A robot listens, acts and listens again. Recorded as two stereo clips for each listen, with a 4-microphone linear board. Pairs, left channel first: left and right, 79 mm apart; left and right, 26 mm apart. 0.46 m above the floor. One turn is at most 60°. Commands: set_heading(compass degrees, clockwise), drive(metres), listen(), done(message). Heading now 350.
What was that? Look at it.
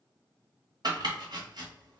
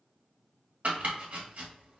set_heading(50)
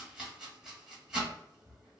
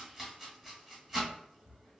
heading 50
set_heading(60)
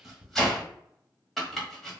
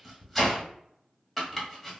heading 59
done("Facing the chopping.")